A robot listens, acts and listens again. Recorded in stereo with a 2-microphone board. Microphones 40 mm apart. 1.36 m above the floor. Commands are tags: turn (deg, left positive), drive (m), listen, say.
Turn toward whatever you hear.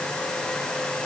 <listen/>
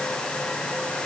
<listen/>
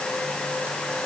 <say>I can't make out anything.</say>